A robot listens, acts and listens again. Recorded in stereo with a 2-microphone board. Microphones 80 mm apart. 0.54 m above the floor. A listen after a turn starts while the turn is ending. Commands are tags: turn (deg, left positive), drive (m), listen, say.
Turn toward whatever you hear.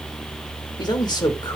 <turn deg="60"/>
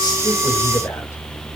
<listen/>
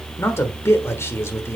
<turn deg="40"/>
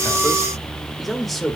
<say>Facing the man speaking.</say>